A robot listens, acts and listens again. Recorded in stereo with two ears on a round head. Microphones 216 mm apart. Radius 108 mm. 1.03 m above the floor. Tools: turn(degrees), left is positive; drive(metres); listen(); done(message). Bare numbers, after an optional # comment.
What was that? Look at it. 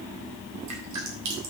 turn(-90)
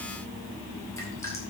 # So it is at 10° left.
turn(10)
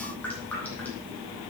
done("Facing the dripping, 2 to 4 m away.")